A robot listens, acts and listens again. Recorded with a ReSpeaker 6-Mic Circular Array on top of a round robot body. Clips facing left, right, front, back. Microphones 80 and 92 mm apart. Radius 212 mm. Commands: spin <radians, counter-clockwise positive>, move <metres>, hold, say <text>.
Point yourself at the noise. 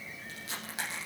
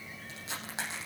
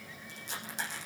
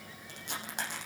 spin -2.71
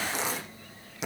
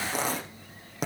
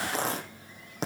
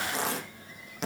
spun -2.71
spin -0.87
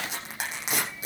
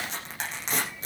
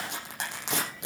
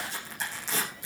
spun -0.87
spin 0.17
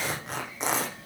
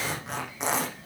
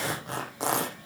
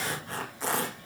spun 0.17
say Facing the tearing paper, over 4 m away.